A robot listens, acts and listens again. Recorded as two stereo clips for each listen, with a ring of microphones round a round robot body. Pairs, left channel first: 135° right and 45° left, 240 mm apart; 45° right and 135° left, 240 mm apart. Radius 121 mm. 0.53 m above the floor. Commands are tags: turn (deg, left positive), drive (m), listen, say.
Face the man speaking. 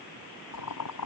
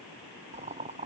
<listen/>
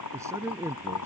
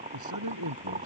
<turn deg="125"/>
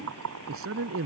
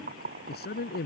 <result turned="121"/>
<turn deg="10"/>
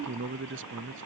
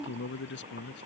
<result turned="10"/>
<say>Found it: a man speaking, straight ahead.</say>